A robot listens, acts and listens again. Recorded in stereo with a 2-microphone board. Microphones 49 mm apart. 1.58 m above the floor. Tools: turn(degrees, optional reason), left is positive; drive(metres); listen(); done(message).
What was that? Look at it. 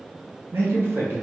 turn(degrees=-45, reason="The man speaking: about 45° right or 135° right.")
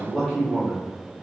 turn(degrees=10, reason="So it is at 10° left.")
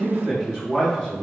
turn(degrees=10, reason="The man speaking is now 10° left.")
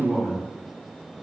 turn(degrees=10, reason="The man speaking is now 10° left.")
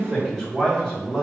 done("Facing the man speaking, 2 to 4 m away.")